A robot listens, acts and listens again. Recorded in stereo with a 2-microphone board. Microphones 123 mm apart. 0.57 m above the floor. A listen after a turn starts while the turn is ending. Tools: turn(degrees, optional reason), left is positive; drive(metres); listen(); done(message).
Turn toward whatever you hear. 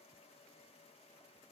listen()
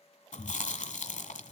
turn(degrees=90)
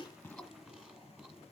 listen()
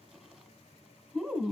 turn(degrees=-10, reason="The chewing is now 10° right.")
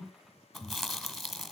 done("Found it: chewing, straight ahead.")